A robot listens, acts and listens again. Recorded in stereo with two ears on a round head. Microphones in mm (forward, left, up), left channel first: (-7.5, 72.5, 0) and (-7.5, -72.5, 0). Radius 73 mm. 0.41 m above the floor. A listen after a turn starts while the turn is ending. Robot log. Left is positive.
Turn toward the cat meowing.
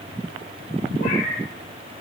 note: The cat meowing: about 65° left or 115° left.
cmd yaw +65
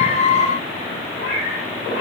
note: So it is at 45° left.
cmd yaw +45
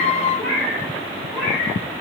note: The cat meowing is now 15° left.
cmd yaw +15
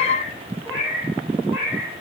end: Found it: a cat meowing, straight ahead.